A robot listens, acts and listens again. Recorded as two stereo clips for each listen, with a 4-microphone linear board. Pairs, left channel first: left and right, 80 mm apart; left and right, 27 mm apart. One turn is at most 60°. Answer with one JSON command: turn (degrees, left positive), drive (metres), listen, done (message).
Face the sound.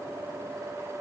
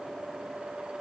{"listen": true}
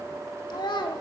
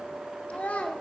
{"turn": 60}
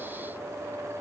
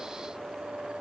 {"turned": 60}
{"listen": true}
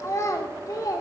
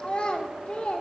{"turn": 50}
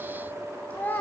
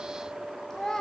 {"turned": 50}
{"turn": 25}
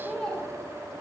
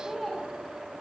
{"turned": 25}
{"turn": 10}
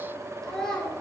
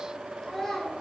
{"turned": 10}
{"done": "Found it: a child speaking, straight ahead."}